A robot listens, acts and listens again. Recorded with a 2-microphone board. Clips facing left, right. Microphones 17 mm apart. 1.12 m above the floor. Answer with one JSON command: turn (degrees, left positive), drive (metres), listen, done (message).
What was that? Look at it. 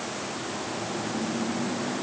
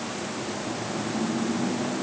{"listen": true}
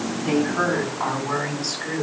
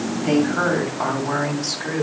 {"turn": -90}
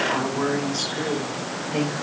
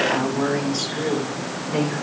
{"turn": -10}
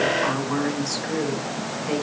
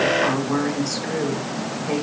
{"done": "Facing the woman speaking."}